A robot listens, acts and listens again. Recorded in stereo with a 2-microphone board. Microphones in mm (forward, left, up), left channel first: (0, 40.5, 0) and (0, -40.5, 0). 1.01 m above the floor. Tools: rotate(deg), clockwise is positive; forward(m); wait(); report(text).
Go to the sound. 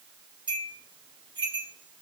rotate(75)
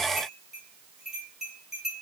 forward(1.0)
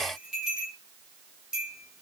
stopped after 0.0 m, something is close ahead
rotate(10)
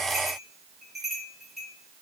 report("Blocked. The bell is further on, straight ahead.")